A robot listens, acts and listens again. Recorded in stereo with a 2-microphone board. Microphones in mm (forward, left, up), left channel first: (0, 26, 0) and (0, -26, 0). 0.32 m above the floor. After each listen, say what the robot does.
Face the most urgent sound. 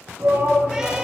Turn 60° right.
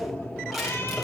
Found it: a shout, straight ahead, over 4 m away.